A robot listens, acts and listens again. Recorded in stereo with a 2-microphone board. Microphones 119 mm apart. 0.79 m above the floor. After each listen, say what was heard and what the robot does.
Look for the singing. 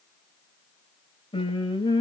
The singing: about 35° left or 145° left. Turn 35° left.
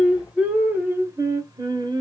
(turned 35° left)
So it is at 40° right. Turn 40° right.
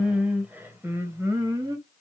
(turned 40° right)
The singing is now 30° right. Turn 30° right.
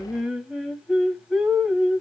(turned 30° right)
Facing the singing.